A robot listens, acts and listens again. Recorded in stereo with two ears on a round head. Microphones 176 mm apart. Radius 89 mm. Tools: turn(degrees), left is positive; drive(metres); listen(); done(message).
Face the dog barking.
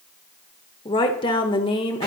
listen()
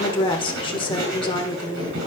listen()
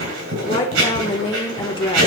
done("I can't make out a dog barking, only writing and a woman speaking.")